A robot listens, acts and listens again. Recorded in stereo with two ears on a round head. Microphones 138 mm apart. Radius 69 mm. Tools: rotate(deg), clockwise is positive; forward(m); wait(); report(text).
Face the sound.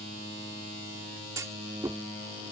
rotate(20)
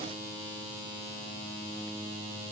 wait()
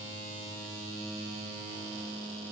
report("I heard a clunk, but can't make it out now. It was about straight ahead or 140° right.")